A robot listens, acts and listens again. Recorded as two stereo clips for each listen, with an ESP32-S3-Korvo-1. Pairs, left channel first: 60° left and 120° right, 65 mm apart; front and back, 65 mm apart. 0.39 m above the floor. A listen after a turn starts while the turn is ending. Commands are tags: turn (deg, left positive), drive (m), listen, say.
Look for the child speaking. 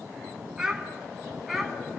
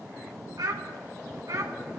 <turn deg="155"/>
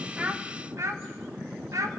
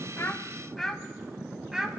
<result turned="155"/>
<turn deg="-100"/>
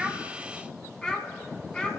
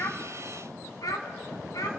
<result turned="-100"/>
<turn deg="-15"/>
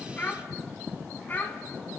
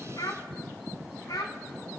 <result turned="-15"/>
<say>Found it: a child speaking, straight ahead, 1 to 2 m away.</say>